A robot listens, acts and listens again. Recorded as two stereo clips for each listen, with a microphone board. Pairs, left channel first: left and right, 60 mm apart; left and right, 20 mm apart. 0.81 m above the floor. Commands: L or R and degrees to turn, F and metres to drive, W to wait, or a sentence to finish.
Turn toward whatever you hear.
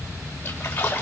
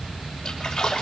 L30
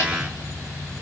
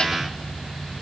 W
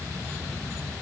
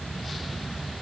I heard a splash, but can't make it out now. It was about straight ahead or 120° left.